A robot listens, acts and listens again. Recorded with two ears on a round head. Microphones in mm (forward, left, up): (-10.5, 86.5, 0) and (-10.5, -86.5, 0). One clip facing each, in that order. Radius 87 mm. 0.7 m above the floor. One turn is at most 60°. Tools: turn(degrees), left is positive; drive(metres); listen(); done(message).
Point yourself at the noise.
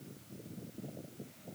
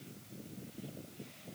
listen()
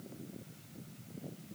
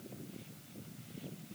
listen()
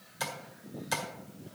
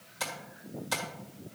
turn(degrees=30)
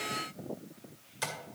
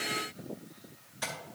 turn(degrees=60)
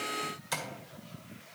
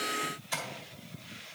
turn(degrees=60)
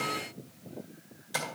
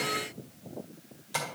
turn(degrees=10)
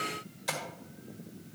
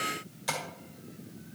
done("Facing the tapping.")